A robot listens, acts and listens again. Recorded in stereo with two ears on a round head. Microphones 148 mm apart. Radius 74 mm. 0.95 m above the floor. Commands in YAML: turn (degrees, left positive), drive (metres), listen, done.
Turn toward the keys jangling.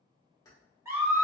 turn: 20
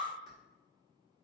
listen: true
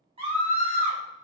listen: true
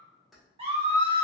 done: "Facing the keys jangling, 1 to 2 m away."